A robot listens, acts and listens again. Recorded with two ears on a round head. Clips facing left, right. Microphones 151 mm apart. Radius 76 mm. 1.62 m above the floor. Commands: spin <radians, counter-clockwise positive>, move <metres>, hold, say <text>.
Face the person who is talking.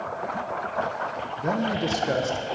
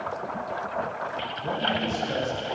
spin 1.31
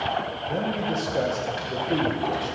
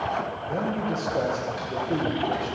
say Found it: a man speaking, straight ahead, 1 to 2 m away.